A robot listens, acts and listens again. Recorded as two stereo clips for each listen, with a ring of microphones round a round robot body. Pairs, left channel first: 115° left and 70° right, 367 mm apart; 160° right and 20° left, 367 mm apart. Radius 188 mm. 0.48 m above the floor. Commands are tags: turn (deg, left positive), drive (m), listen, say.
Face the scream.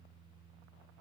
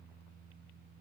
<listen/>
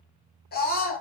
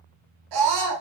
<turn deg="45"/>
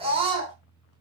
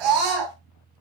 <turn deg="10"/>
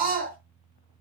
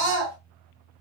<say>Found it: a scream, straight ahead.</say>